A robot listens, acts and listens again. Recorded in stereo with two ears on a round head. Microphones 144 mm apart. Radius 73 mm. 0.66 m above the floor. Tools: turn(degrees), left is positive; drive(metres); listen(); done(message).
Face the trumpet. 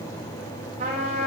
turn(degrees=-40)
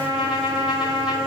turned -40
done("Found it: a trumpet, straight ahead, 2 to 4 m away.")